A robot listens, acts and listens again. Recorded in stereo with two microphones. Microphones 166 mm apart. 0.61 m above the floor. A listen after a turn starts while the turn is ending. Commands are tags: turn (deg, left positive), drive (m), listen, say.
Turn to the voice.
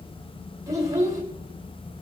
<turn deg="-20"/>
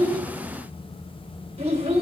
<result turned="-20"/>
<turn deg="-140"/>
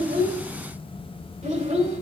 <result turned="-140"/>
<turn deg="-45"/>
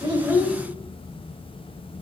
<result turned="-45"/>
<say>Found it: a child speaking, straight ahead, 1 to 2 m away.</say>